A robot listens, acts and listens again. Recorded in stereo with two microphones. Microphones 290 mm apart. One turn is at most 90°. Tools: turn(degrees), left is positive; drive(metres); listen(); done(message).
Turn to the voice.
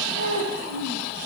turn(degrees=-70)
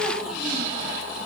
listen()
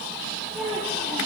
done("Facing the child speaking, over 4 m away.")